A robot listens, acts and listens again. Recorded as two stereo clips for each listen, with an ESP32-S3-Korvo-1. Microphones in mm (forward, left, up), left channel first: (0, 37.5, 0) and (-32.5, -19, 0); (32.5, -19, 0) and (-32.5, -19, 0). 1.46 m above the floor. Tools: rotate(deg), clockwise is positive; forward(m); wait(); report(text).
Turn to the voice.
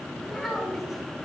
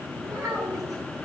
rotate(-150)
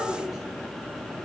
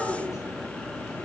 rotate(40)
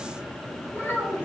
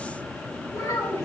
report("Found it: a child speaking, straight ahead, 2 to 4 m away.")